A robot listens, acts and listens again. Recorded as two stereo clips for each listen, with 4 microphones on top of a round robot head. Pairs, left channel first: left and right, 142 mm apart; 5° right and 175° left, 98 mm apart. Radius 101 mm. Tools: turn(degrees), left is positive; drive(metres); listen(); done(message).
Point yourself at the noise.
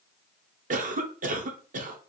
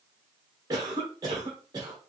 turn(degrees=-120)
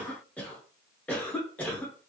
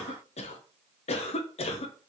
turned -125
turn(degrees=10)
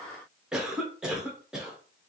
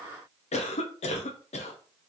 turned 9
done("Facing the cough.")